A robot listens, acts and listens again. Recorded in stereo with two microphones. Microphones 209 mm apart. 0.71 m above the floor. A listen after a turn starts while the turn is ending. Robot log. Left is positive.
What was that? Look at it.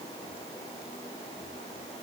cmd idle
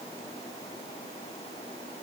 cmd idle
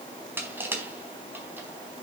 cmd yaw -30
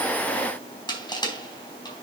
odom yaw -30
note: So it is at 20° left.
cmd yaw +20
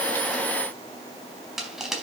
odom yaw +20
end: Found it: crushing, straight ahead, 2 to 4 m away.